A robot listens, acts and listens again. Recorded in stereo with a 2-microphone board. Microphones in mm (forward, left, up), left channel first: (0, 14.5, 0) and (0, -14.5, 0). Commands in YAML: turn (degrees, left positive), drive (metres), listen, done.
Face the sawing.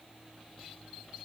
listen: true
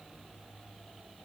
listen: true
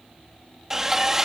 turn: -15
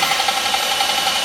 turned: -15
done: "Found it: sawing, straight ahead."